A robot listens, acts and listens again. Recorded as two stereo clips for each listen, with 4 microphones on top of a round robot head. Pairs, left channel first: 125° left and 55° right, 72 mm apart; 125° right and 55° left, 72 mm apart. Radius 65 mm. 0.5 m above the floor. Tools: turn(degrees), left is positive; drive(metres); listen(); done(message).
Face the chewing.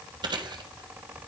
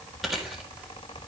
turn(degrees=-35)
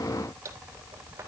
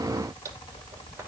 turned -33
done("Found it: chewing, straight ahead.")